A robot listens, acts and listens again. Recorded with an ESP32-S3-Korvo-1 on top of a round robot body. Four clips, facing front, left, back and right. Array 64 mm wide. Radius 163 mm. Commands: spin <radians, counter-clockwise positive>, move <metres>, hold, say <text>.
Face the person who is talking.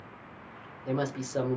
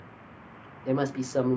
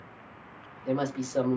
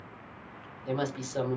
spin 1.48
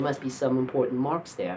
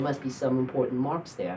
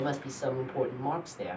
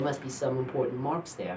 spin 0.17
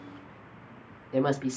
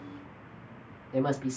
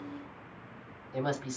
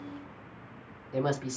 say Found it: a woman speaking, straight ahead, 1 to 2 m away.